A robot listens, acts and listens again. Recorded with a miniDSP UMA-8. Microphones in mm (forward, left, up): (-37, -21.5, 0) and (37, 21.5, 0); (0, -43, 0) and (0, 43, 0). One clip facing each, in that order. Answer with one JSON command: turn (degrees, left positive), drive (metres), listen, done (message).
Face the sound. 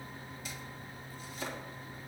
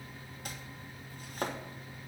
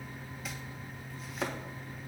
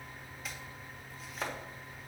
{"done": "Facing the chopping."}